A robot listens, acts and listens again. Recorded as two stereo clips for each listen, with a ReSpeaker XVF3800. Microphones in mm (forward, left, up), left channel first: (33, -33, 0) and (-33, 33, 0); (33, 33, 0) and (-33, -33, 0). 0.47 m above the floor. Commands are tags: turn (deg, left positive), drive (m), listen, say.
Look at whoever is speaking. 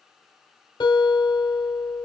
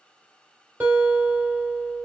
<listen/>
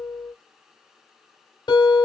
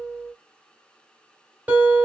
<listen/>
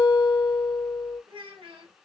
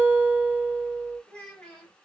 <turn deg="125"/>
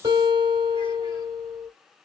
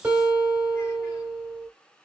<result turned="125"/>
<listen/>
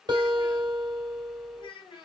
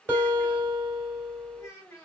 <turn deg="-15"/>
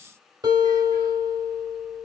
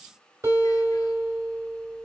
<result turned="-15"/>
<listen/>
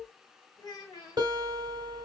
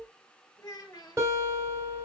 <say>Found it: a child speaking, straight ahead, 2 to 4 m away.</say>